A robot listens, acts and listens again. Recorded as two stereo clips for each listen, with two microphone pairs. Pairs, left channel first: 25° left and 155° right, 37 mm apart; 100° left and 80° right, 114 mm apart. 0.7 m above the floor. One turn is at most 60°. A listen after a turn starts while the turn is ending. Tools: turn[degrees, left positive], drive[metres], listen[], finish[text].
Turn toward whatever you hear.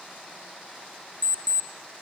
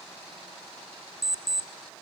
Thought: The alarm clock: 165° right.
Action: turn[-60]
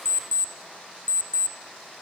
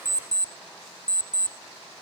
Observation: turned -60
Thought: The alarm clock is now 130° right.
Action: turn[-60]
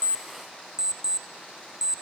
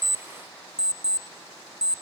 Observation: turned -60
Thought: The alarm clock is now 80° right.
Action: turn[-60]
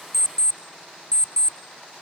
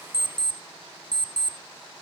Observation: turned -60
Thought: The alarm clock is now 35° right.
Action: turn[-35]
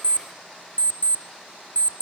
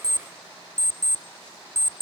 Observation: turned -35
Thought: The alarm clock is now 10° right.
Action: turn[-10]
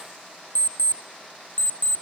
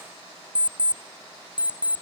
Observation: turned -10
Action: finish[Found it: an alarm clock, straight ahead.]